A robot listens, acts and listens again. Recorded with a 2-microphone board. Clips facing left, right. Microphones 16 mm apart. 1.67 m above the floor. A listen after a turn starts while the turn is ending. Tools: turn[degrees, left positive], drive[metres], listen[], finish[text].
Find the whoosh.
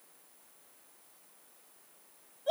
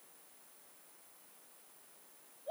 Action: listen[]
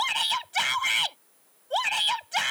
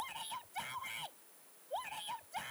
Action: listen[]
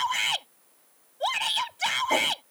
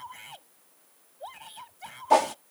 Thought: The whoosh: about 55° right or 125° right.
Action: turn[-55]
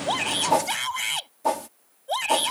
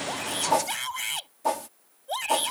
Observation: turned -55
Action: finish[Facing the whoosh.]